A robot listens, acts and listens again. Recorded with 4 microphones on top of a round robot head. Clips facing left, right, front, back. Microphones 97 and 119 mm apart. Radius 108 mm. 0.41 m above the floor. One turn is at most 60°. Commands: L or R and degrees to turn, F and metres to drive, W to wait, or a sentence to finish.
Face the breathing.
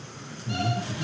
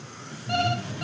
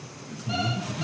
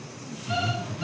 L30
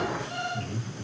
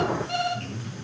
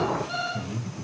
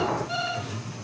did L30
Facing the breathing, over 4 m away.